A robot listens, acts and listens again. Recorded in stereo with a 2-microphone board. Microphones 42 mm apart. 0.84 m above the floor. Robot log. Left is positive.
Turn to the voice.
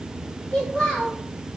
note: The child speaking: about 25° left or 155° left.
cmd yaw +25
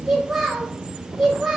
end: Found it: a child speaking, straight ahead, 1 to 2 m away.